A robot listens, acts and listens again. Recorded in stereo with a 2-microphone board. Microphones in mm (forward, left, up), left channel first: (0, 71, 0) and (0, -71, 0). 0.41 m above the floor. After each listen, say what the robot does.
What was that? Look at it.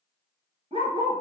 Turn 40° right.
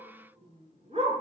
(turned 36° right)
Turn 50° right.
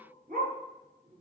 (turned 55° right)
Turn 80° right.
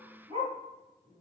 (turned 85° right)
Turn 35° right.
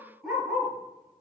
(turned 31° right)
Found it: a dog barking, straight ahead.